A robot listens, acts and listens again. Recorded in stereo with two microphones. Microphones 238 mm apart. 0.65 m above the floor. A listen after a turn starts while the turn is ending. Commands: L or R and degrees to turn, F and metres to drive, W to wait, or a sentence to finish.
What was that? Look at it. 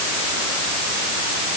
W
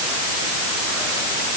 W
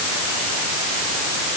I can't make out anything to turn to.